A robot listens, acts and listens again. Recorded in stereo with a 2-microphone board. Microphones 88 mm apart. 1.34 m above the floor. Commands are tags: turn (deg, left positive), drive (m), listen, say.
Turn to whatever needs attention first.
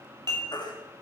<turn deg="55"/>
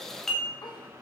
<listen/>
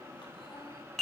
<listen/>
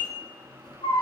<turn deg="65"/>
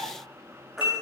<say>Found it: a baby crying, straight ahead, 1 to 2 m away.</say>